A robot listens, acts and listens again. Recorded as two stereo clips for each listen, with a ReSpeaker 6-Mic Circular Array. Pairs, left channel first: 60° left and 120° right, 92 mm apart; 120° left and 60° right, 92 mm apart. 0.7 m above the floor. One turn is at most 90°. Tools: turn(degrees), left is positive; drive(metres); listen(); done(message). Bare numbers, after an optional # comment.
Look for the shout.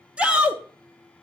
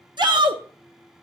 # The shout: 45° right.
turn(-45)
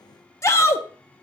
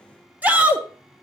# The shout is now 10° left.
turn(10)
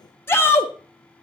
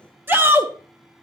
done("Found it: a shout, straight ahead.")